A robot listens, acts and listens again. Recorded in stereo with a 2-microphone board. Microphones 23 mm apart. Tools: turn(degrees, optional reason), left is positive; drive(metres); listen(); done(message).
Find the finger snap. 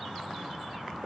listen()
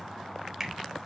turn(degrees=-30)
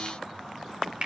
turn(degrees=-135, reason="So it is at 135° right.")
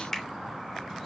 turn(degrees=15, reason="The finger snap is now 15° left.")
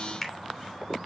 done("Facing the finger snap.")